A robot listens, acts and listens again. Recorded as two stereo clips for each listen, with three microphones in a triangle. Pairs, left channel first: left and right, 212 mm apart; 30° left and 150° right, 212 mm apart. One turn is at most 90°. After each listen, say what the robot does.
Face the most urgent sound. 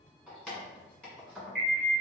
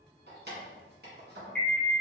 Turn 55° right.
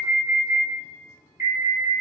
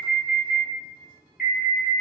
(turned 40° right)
Turn 15° right.
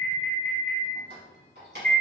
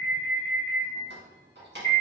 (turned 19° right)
Found it: an alarm, straight ahead, 1 to 2 m away.